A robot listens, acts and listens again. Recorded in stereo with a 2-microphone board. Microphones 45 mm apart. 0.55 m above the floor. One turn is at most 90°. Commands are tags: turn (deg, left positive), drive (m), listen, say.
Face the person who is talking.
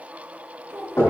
<turn deg="-75"/>
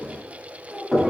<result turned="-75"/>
<turn deg="-20"/>
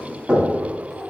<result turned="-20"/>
<listen/>
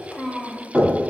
<say>Found it: a child speaking, straight ahead.</say>